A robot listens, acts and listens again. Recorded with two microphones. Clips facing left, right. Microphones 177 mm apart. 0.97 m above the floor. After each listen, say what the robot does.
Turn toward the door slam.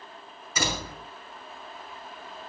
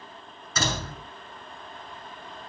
Turn 30° left.
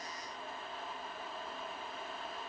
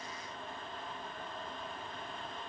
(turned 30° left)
Keep listening.
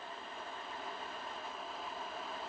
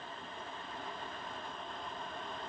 I heard a door slam, but can't make it out now. It was about 15° right or 135° left.